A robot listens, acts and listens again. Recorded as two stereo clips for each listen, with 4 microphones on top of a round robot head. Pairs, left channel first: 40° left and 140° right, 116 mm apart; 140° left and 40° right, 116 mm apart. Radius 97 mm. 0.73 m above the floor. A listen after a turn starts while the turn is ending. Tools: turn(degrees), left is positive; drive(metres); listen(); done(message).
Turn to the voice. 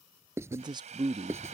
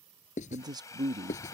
turn(degrees=-95)
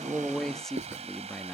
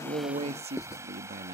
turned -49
turn(degrees=-45)
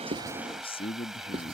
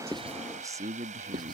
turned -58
turn(degrees=15)
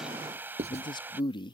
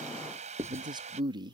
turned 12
done("Facing the man speaking.")